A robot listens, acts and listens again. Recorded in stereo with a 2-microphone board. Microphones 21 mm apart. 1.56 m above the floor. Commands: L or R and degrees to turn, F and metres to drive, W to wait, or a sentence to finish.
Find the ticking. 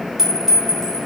W
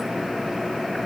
W
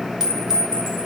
I can't make out ticking to turn to.